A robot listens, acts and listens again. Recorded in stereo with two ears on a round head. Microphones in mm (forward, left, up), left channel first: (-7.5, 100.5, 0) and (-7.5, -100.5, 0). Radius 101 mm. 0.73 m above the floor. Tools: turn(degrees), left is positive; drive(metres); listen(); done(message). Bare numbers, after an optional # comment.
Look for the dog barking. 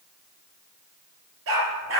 # The dog barking: about 70° right or 110° right.
turn(-70)
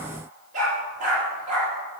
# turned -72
# So it is at 35° right.
turn(-35)
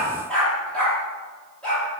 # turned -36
done("Found it: a dog barking, straight ahead, over 4 m away.")